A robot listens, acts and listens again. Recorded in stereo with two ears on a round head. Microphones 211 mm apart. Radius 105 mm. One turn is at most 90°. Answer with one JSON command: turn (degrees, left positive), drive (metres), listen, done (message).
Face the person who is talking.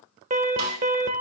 {"listen": true}
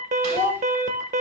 {"turn": 30}
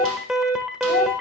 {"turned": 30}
{"listen": true}
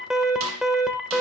{"listen": true}
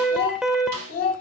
{"turn": 90}
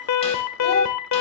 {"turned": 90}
{"turn": 50}
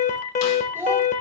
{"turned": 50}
{"turn": -10}
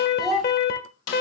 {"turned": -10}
{"done": "Facing the child speaking, 2 to 4 m away."}